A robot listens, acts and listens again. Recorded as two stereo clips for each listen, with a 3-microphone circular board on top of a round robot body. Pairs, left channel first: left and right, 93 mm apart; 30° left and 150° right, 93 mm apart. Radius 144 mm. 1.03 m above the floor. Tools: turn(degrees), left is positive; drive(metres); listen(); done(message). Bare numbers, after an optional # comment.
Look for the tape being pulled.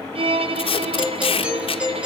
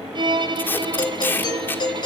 # The tape being pulled: 100° left.
turn(100)
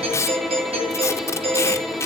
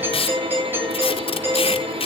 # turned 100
# The tape being pulled is now 30° left.
turn(30)
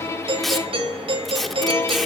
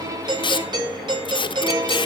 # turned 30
done("Found it: tape being pulled, straight ahead, 1 to 2 m away.")